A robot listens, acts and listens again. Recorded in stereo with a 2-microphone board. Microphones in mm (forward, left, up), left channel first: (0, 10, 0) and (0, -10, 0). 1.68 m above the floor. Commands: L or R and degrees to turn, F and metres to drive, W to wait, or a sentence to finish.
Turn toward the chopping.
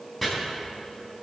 L30
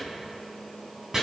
R25
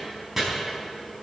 R10
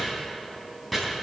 Found it: chopping, straight ahead, over 4 m away.